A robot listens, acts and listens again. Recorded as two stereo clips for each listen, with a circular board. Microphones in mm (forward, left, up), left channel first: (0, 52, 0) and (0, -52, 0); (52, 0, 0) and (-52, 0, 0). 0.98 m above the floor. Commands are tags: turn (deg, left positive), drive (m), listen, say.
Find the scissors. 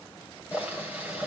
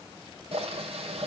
<listen/>
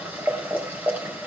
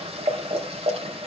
<listen/>
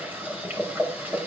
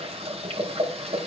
<say>I can't make out scissors, only boiling.</say>